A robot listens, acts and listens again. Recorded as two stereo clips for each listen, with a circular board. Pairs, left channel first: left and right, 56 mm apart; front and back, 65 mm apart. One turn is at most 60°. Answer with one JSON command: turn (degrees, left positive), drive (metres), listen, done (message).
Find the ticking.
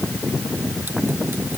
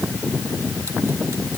{"listen": true}
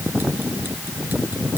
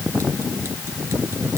{"listen": true}
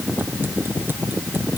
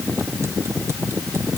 {"done": "I can't make out ticking."}